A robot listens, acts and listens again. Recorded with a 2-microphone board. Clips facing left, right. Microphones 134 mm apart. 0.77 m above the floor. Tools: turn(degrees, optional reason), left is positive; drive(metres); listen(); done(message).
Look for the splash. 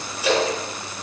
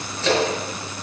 turn(degrees=30)
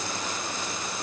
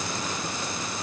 listen()
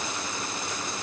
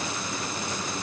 done("I heard a splash, but can't make it out now. It was about 20° right or 140° left.")